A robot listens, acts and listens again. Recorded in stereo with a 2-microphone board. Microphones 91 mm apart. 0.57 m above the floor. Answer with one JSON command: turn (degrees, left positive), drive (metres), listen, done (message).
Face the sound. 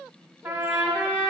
{"turn": -20}
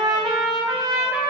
{"turn": -140}
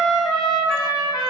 {"done": "Facing the trumpet, 1 to 2 m away."}